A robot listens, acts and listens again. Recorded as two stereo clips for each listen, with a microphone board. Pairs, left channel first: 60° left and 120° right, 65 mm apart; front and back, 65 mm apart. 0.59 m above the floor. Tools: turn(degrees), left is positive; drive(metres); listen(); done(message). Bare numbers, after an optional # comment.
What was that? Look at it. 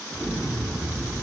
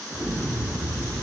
# The explosion: 145° left.
turn(145)
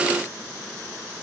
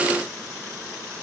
done("I heard an explosion from this way, but can't make it out now.")